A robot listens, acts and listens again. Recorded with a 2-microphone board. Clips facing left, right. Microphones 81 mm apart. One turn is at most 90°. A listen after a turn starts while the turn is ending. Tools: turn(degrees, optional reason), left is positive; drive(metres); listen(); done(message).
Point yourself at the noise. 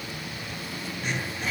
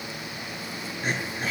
turn(degrees=-40, reason="The throat clearing: about 40° right or 140° right.")
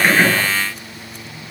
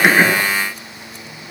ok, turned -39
listen()
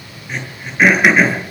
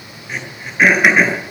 done("Found it: throat clearing, straight ahead.")